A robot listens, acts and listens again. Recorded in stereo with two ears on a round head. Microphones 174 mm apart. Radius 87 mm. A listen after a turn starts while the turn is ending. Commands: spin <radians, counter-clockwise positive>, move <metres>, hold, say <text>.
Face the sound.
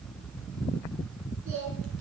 spin -1.57
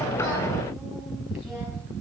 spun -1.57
hold
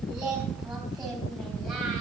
say Found it: singing, straight ahead, over 4 m away.